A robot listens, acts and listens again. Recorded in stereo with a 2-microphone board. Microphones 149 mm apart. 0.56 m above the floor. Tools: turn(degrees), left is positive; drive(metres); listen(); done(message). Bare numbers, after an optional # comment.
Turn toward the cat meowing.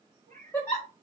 # The cat meowing: about 65° right or 115° right.
turn(-65)
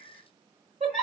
# So it is at 65° right.
turn(-65)
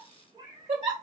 # The cat meowing is now 35° right.
turn(-35)
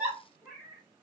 # The cat meowing is now 15° right.
turn(-15)
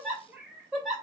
# The cat meowing is now 10° right.
turn(-10)
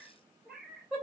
done("Facing the cat meowing.")